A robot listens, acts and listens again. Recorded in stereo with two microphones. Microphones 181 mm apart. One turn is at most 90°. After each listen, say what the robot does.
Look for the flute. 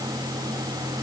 Keep listening.
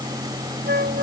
Turn 60° right.
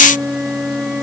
Facing the flute.